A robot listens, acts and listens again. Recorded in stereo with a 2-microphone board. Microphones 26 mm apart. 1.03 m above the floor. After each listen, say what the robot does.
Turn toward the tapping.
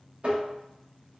Turn 50° right.
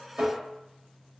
Turn 80° right.
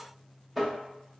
Facing the tapping, under 1 m away.